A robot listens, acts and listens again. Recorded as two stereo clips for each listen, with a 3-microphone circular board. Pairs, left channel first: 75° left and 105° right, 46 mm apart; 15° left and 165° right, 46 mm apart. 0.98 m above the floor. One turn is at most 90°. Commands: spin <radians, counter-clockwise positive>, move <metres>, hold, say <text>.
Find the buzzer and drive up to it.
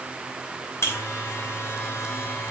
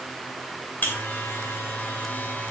spin 1.05
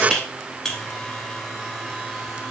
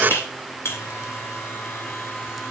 move 1.0
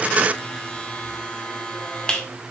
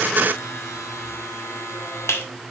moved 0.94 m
move 1.0
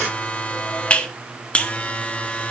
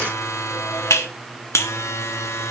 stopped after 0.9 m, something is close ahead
spin 0.17
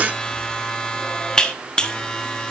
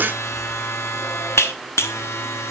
say I am next to the buzzer.